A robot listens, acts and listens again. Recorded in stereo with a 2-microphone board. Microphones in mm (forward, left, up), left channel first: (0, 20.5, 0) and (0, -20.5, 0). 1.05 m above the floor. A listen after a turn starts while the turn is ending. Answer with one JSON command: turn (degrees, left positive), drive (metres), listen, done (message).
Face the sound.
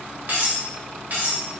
{"turn": -50}
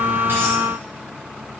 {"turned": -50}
{"listen": true}
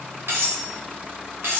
{"turn": -80}
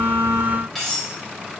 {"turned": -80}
{"done": "Facing the cutlery clinking."}